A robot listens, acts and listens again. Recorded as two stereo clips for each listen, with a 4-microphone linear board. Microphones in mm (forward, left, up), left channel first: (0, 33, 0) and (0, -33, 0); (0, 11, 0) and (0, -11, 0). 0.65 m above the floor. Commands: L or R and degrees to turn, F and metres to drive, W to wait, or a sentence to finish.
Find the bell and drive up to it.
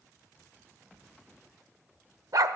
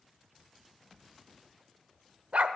W
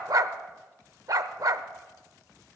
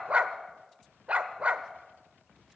W
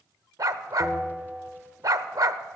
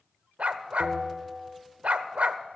R30
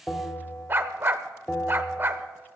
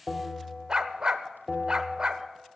L25
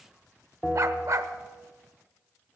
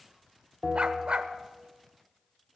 L10
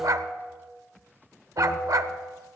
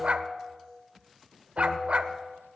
F1.0
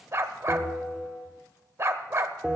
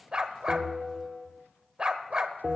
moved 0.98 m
F1.0
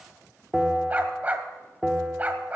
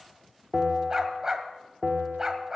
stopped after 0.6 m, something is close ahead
I am next to the bell.